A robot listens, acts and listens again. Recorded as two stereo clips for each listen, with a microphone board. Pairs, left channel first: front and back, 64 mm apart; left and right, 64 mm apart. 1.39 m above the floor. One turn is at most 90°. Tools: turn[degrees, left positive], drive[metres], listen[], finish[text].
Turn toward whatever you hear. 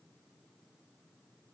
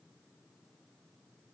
Action: listen[]
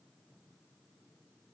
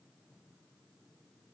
Action: listen[]
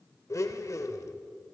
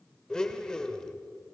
Thought: The blender: 15° left.
Action: turn[15]
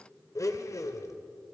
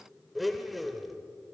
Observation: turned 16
Action: finish[Facing the blender, 1 to 2 m away.]